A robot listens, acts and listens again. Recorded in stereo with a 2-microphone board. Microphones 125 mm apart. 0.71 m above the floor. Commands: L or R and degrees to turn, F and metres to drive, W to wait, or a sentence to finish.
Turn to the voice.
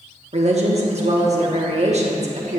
R55
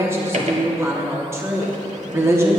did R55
R25
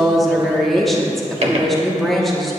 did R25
Facing the woman speaking, 1 to 2 m away.